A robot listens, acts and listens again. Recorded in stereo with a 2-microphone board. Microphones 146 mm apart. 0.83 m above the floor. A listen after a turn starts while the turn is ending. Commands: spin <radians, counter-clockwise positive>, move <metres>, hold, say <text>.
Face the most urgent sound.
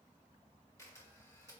hold
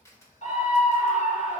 spin 0.96
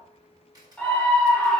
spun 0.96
spin 0.17
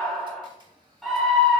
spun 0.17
say Facing the scream, 1 to 2 m away.